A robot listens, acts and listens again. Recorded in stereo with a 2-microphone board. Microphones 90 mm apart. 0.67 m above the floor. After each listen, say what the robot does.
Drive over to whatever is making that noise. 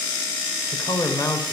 Turn 45° left.
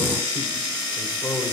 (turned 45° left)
Turn 85° left.
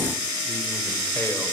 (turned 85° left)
Keep listening.
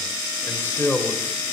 Turn 30° left.
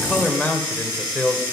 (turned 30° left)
Turn 15° left.
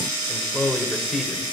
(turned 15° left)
Drive 1.0 m forward.
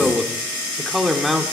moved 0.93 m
Drive 1.0 m forward.
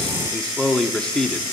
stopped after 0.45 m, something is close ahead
Turn 10° left.
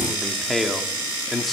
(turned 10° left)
Arrived at the man speaking, straight ahead.